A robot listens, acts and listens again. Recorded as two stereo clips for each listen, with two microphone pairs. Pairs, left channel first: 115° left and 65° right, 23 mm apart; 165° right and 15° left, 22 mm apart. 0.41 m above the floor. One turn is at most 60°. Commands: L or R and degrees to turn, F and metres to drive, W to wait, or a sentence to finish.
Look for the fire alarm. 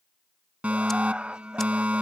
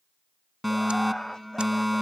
R60
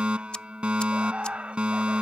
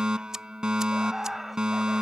R30
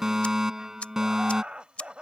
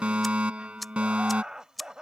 Found it: a fire alarm, straight ahead.